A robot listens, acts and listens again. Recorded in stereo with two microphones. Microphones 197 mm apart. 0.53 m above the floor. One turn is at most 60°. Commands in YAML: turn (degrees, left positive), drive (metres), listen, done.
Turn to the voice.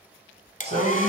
turn: -60
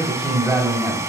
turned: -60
done: "Facing the man speaking."